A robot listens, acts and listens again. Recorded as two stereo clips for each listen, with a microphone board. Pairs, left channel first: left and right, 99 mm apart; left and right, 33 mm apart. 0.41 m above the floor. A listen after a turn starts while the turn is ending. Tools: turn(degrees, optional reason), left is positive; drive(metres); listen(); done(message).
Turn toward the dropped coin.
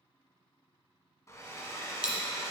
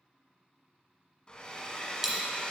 turn(degrees=-30)
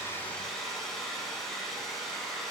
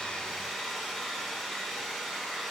listen()
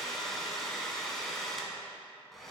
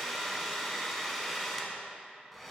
done("I heard a dropped coin, but can't make it out now. It was about 20° left or 140° right.")